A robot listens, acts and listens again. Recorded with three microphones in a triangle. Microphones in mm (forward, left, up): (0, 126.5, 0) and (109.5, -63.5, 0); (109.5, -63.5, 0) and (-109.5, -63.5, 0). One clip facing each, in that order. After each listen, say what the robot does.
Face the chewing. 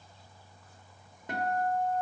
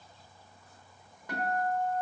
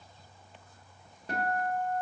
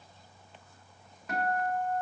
Keep listening.
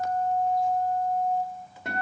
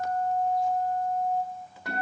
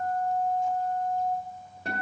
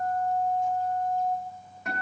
Keep listening.
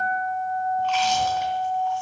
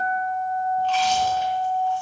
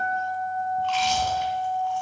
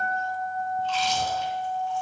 Found it: chewing, straight ahead, 2 to 4 m away.